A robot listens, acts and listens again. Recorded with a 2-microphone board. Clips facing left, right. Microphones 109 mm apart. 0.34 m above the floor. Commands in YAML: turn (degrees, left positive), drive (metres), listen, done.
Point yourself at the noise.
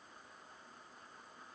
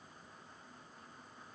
listen: true
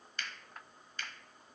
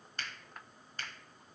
turn: -40
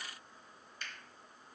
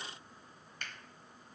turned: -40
turn: -90
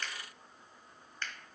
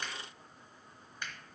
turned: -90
turn: -15
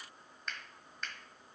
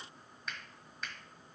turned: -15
done: "Facing the finger snap, 1 to 2 m away."